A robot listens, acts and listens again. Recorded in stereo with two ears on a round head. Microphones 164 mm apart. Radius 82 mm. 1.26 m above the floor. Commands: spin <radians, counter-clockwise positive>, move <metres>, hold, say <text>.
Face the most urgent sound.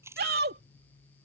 spin -1.05
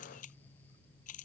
hold
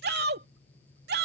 spin -1.05
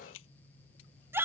spin -0.26
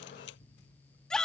say Facing the shout.